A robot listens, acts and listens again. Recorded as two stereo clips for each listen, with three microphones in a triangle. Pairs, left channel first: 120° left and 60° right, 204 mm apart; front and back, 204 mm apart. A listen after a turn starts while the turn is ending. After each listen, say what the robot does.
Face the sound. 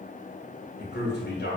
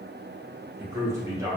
Turn 105° left.
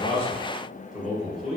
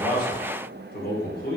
Turn 30° left.
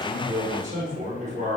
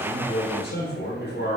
Turn 15° right.
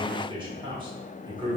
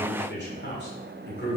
Facing the man speaking.